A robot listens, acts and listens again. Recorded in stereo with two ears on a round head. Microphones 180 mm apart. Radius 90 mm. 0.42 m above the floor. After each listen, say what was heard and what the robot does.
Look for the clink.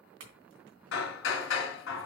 Turn 90° right.
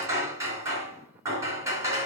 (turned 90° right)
Keep listening.
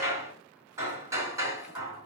Keep listening.
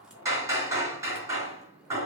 I heard a clink from this way, but can't make it out now.